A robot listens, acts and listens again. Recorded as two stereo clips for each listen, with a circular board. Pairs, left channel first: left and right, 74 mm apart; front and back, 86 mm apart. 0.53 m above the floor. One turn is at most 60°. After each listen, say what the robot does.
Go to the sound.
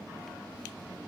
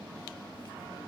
Keep listening.
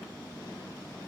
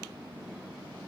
Keep listening.
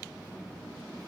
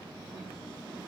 I can't make out anything.